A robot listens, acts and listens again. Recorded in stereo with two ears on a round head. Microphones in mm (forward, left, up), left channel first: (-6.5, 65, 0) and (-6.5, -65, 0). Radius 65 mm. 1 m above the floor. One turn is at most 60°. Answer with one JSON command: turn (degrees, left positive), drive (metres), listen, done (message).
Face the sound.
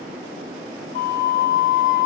{"turn": 60}
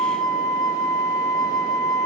{"turn": 30}
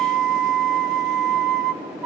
{"done": "Facing the flute, 1 to 2 m away."}